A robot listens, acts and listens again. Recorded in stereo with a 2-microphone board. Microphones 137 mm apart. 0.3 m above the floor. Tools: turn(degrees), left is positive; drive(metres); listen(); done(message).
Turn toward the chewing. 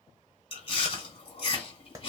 turn(degrees=40)
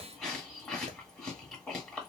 done("Facing the chewing.")